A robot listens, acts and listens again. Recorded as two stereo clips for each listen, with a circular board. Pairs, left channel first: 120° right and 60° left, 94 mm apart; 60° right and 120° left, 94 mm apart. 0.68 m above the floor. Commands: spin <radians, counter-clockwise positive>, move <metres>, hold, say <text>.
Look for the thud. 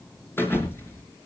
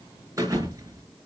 spin 3.05
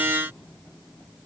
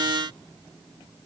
say Facing where the thud came from. I can't hear it now.